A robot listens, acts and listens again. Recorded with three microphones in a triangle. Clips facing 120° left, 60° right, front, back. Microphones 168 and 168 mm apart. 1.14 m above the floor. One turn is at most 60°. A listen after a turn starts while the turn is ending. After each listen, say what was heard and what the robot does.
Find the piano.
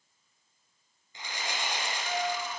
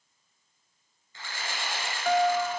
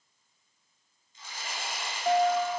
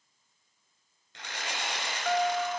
The piano: 65° right. Turn 60° right.
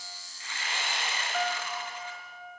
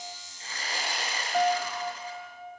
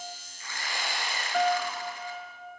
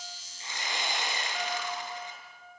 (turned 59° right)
Facing the piano, 2 to 4 m away.